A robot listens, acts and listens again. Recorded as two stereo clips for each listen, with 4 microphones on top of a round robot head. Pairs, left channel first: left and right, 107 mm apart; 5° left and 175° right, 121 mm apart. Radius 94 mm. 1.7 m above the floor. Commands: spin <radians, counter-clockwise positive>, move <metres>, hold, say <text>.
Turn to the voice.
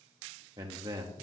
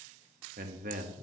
spin -2.62
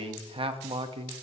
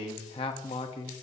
spin -0.87
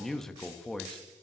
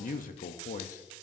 say Facing the man speaking.